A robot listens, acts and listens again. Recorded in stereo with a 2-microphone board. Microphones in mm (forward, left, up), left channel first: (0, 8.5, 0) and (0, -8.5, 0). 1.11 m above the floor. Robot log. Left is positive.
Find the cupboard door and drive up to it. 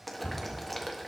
note: The cupboard door: about 55° left or 125° left.
cmd yaw +55
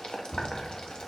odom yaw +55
note: So it is at 70° left.
cmd yaw +70
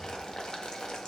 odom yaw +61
note: Nothing new. It was at 10° left.
cmd yaw +10
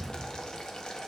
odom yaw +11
cmd fwd 1.0
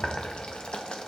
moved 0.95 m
cmd idle
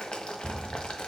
cmd fwd 1.0
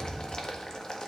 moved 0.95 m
cmd fwd 1.0
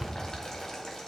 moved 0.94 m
cmd fwd 1.0
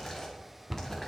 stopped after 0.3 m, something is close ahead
end: I am next to the cupboard door.